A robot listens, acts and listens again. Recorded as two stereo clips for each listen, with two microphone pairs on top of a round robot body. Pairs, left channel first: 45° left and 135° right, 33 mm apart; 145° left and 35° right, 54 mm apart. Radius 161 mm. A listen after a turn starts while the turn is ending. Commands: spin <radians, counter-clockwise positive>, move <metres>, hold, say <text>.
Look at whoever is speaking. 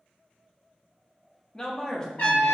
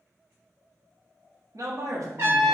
spin -0.44
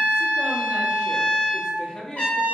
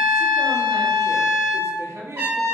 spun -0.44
spin -0.26
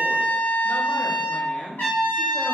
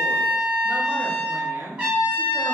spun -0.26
say Found it: a man speaking, straight ahead, 1 to 2 m away.